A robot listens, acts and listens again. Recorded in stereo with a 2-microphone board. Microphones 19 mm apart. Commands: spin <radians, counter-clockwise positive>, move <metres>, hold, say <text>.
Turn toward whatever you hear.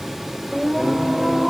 spin -0.52
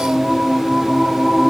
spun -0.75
spin -2.18
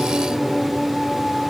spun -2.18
say Facing the singing, over 4 m away.